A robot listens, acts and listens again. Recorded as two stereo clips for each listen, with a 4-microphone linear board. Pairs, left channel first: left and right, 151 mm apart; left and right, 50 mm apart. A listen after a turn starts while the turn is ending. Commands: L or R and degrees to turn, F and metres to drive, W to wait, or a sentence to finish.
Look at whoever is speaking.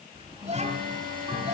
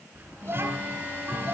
R50
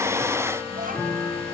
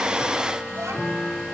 R75
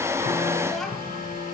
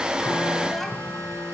W
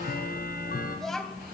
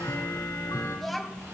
Found it: a child speaking, straight ahead, 2 to 4 m away.